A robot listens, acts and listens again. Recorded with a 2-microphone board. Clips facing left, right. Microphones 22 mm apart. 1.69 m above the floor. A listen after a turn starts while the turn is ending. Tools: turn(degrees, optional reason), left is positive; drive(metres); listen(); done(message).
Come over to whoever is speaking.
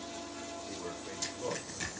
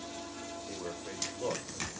turn(degrees=-40, reason="The man speaking: about 40° right or 140° right.")
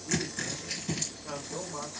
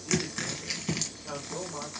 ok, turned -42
drive(metres=1.0)
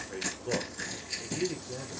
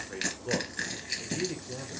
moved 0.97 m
drive(metres=1.0)
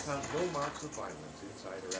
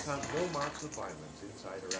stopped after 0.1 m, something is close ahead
done("I am next to the man speaking.")